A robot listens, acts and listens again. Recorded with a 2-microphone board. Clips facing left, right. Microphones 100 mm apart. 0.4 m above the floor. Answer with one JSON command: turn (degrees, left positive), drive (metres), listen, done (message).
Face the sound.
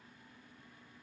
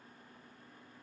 {"listen": true}
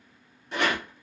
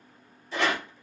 {"turn": 90}
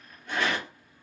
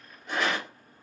{"turn": -10}
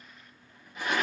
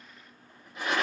{"done": "Found it: a rattle, straight ahead."}